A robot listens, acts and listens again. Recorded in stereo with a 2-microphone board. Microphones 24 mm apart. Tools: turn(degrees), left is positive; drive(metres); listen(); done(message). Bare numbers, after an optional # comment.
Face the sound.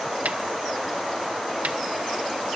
turn(-90)
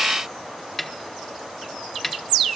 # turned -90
done("Facing the snare drum.")